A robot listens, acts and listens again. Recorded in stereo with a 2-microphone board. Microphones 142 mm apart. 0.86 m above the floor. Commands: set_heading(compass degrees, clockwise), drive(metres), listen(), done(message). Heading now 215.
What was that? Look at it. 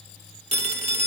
set_heading(270)
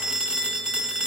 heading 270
done("Facing the phone ringing.")